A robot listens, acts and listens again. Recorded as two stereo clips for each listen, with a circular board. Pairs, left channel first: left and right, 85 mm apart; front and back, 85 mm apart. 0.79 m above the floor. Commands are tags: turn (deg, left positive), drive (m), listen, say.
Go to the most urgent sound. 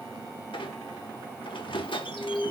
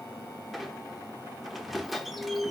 <turn deg="145"/>
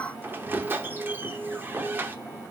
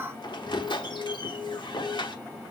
<turn deg="25"/>
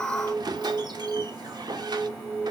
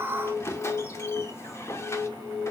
<drive m="1.0"/>
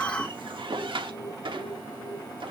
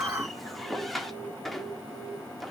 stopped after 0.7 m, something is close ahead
<say>Something is in my way. I am facing the alarm but have not reached it.</say>